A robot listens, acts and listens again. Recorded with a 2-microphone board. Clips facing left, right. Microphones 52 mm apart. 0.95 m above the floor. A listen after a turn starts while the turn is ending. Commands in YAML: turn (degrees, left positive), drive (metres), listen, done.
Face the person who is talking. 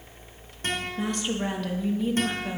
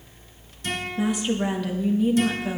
turn: -30
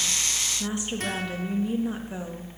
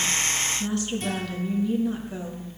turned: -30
turn: 25
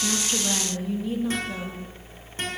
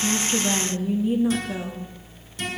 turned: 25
turn: -15
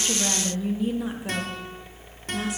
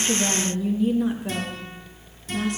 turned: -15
done: "Found it: a woman speaking, straight ahead, 1 to 2 m away."